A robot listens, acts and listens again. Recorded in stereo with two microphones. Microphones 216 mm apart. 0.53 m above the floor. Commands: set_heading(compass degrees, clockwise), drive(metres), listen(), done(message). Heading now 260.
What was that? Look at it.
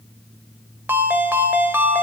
set_heading(290)
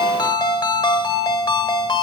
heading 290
set_heading(270)
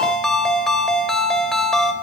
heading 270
done("Found it: a ringtone, straight ahead, under 1 m away.")